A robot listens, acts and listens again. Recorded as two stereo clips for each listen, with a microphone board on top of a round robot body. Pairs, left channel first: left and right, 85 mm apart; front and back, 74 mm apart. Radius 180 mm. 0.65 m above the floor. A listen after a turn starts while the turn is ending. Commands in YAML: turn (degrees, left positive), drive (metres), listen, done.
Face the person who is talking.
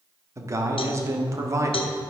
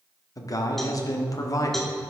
turn: -40
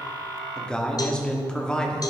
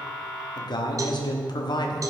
turn: 10
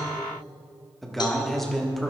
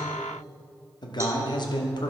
done: "Found it: a man speaking, straight ahead."